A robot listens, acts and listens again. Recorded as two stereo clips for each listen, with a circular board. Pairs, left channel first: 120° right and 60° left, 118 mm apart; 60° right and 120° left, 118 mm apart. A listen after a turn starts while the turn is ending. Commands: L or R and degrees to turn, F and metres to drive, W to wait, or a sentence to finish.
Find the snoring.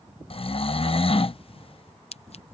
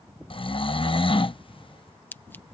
R95
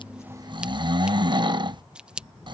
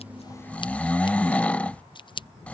L15
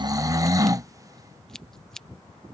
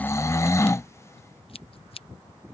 Facing the snoring.